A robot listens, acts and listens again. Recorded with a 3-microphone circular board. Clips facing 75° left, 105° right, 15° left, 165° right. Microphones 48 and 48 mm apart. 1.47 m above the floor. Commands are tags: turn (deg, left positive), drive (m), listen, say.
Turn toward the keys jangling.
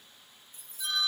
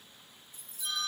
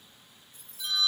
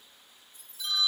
<turn deg="25"/>
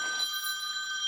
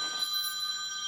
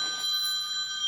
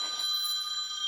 <listen/>
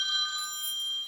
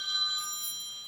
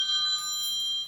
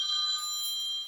<listen/>
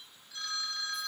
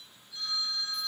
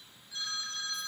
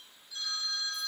<say>Facing where the keys jangling came from. I can't hear it now.</say>